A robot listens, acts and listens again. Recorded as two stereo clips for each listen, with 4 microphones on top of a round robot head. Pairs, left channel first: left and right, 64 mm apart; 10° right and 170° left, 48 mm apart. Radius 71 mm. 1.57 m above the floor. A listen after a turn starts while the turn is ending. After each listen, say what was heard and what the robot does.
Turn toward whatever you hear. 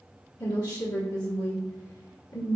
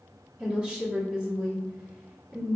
The woman speaking: 100° left. Turn 100° left.
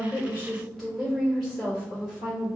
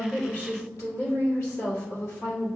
The woman speaking is now 10° left. Turn 10° left.
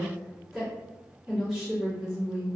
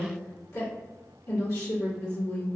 Facing the woman speaking, 1 to 2 m away.